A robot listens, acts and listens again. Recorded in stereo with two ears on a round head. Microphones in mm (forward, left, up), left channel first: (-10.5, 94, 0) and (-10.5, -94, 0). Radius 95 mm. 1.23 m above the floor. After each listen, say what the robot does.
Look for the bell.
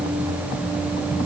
Keep listening.
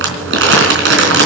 Keep listening.
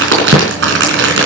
I can't make out a bell, only crumpling.